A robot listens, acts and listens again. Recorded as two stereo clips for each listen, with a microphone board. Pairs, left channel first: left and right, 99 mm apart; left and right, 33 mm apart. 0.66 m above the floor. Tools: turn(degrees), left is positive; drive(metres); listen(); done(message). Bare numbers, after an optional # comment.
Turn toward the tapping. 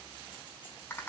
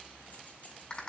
listen()
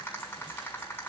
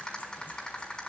listen()
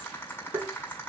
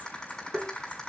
# The tapping: about 40° right or 140° right.
turn(-40)
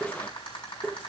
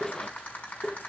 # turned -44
done("Facing the tapping.")